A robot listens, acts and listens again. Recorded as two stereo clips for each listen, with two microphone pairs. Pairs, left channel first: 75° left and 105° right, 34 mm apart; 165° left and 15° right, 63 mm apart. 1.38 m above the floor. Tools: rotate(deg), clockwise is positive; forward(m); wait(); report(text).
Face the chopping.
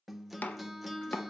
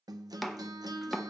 rotate(-80)
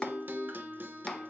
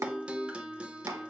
rotate(-10)
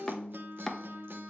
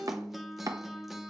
report("Found it: chopping, straight ahead, under 1 m away.")